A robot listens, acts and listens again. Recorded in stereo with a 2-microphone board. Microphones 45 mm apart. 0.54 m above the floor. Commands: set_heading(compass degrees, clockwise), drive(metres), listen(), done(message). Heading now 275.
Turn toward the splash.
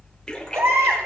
set_heading(260)
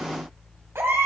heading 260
listen()
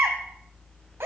done("I heard a splash, but can't make it out now. It was about straight ahead or 150° left.")